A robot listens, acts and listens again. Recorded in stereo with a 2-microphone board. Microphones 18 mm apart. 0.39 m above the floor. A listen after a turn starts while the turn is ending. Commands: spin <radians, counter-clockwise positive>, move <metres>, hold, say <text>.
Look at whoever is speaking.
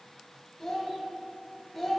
spin 0.35
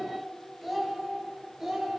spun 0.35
spin -0.35
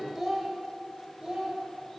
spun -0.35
spin -0.70
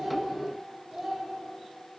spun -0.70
spin -0.35
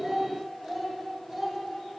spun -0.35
say Facing the child speaking.